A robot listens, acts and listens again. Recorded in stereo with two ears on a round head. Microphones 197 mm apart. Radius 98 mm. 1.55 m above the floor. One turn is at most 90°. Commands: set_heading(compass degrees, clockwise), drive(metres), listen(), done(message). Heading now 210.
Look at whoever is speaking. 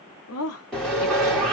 set_heading(140)
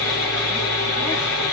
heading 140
listen()
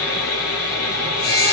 listen()
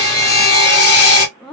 done("Facing the woman speaking, under 1 m away.")